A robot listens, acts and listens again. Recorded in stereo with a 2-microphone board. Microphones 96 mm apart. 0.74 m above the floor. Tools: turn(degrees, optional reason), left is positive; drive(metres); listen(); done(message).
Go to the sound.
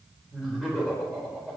turn(degrees=-30)
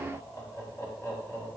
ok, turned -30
turn(degrees=30, reason="So it is at 30° left.")
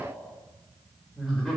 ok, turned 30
drive(metres=1.0)
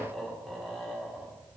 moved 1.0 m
drive(metres=1.0)
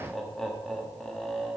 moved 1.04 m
drive(metres=1.0)
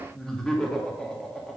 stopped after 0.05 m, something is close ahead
done("I am next to the laughter.")